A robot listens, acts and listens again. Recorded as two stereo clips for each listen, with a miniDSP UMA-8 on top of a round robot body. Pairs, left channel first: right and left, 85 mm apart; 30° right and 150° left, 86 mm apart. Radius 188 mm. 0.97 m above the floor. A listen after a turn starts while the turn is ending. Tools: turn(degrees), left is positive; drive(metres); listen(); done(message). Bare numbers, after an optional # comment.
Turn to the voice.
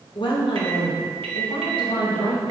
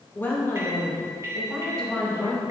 # The woman speaking: 115° right.
turn(-115)
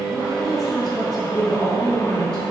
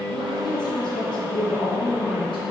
done("Found it: a woman speaking, straight ahead, 2 to 4 m away.")